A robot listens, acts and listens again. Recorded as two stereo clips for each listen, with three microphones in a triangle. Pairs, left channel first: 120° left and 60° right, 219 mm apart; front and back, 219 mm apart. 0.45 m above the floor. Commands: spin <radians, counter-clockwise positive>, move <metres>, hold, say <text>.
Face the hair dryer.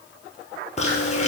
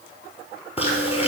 hold
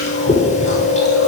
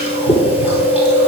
hold
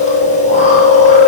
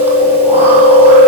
say I can't make out a hair dryer to turn to.